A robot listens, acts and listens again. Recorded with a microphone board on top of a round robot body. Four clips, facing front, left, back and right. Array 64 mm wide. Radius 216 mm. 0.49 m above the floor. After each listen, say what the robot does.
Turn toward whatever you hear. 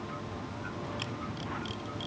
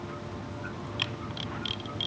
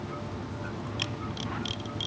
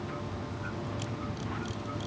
Turn 105° left.
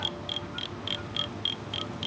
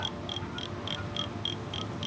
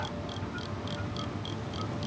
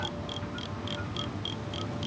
Turn 10° left.
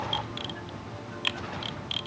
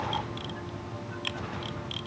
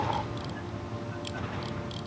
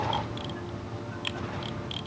Facing the camera shutter.